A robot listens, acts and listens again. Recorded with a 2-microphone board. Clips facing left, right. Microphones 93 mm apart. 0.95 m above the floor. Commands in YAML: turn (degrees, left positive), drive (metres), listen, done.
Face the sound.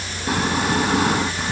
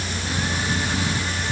turn: 65
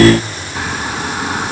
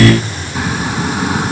done: "Found it: snoring, straight ahead."